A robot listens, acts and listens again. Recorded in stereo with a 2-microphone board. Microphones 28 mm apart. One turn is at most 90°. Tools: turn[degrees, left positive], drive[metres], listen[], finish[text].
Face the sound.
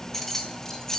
Thought: The keys jangling: about 15° left or 165° left.
Action: turn[15]
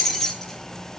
Action: turn[30]
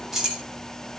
Thought: So it is at 15° right.
Action: turn[-15]
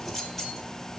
Action: listen[]
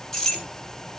Thought: The keys jangling is now 10° left.
Action: turn[10]
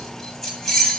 Action: finish[Facing the keys jangling, 2 to 4 m away.]